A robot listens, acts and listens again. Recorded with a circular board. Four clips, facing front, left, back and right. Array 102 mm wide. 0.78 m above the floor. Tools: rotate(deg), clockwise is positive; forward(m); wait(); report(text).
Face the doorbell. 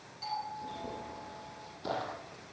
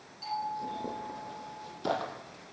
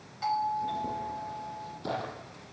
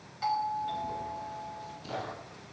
rotate(130)
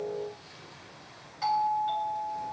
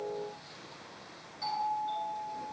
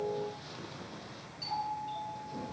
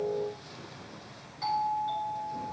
rotate(10)
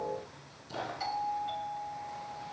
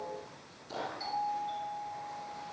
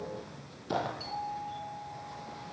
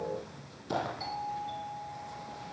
report("Facing the doorbell.")